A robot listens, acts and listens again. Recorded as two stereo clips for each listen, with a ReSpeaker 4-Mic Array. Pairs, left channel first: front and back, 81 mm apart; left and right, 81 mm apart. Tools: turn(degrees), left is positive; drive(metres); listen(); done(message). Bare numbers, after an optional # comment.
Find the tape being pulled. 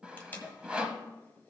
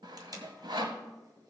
# The tape being pulled: 65° right.
turn(-65)
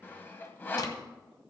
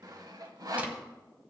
listen()
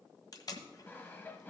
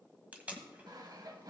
# The tape being pulled is now 20° right.
turn(-20)
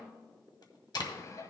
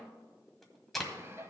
done("Found it: tape being pulled, straight ahead, 1 to 2 m away.")